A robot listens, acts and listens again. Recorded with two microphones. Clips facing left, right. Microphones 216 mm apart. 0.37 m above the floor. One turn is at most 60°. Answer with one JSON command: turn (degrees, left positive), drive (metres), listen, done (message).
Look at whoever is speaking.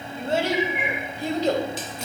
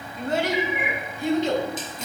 {"turn": 40}
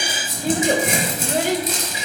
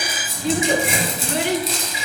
{"turn": 45}
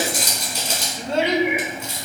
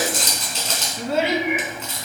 {"turn": -10}
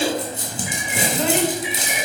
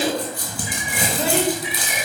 {"done": "Facing the child speaking."}